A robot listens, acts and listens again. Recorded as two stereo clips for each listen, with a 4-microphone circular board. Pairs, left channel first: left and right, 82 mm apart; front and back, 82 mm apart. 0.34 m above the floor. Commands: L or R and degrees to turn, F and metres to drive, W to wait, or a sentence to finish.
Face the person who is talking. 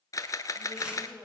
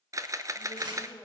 R15
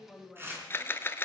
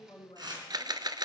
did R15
Facing the woman speaking, 2 to 4 m away.